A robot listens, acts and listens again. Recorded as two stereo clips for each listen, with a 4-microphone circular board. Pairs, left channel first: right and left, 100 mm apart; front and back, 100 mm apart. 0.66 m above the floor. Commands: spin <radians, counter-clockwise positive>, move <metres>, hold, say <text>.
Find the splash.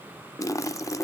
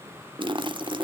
spin -2.53
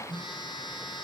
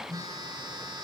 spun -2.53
say Facing where the splash came from. I can't hear it now.